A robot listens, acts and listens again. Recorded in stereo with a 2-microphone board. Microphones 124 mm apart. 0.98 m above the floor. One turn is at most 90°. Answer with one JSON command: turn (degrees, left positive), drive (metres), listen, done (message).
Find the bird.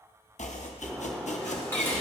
{"turn": -30}
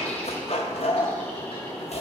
{"turn": 15}
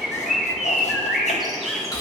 {"done": "Facing the bird, 1 to 2 m away."}